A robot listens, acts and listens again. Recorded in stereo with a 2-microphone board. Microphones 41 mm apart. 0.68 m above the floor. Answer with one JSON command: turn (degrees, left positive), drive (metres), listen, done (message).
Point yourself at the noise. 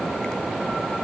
{"listen": true}
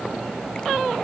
{"listen": true}
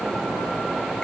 {"done": "I can't make out anything."}